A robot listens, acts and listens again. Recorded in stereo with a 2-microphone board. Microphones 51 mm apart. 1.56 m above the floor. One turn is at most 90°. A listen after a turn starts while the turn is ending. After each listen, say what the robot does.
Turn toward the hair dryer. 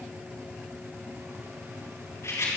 Keep listening.
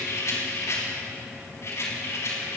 Keep listening.
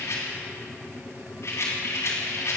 I can't make out a hair dryer to turn to.